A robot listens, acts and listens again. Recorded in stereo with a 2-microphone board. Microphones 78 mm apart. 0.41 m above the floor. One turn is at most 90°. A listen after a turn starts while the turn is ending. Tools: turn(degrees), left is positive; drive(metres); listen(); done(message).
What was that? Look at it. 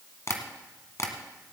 turn(degrees=45)
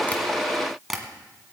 done("Facing the tapping, 1 to 2 m away.")